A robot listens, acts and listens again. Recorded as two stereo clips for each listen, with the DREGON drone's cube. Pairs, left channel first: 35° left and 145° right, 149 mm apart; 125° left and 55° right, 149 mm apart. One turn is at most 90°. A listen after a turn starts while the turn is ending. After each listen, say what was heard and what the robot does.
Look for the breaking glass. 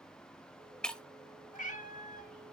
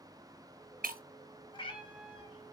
The breaking glass: 50° right. Turn 50° right.
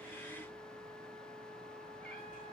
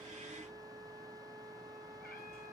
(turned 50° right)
I heard breaking glass from this way, but can't make it out now.